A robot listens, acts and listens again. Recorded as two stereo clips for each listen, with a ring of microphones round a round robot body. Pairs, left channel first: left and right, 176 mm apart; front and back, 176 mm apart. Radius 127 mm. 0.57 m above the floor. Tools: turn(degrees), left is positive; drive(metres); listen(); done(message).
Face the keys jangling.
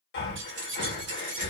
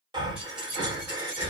turn(degrees=-100)
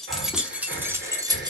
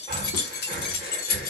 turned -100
turn(degrees=-25)
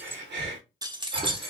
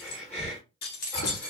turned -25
turn(degrees=-35)
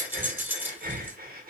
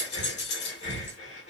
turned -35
turn(degrees=-10)
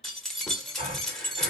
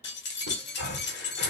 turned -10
done("Found it: keys jangling, straight ahead.")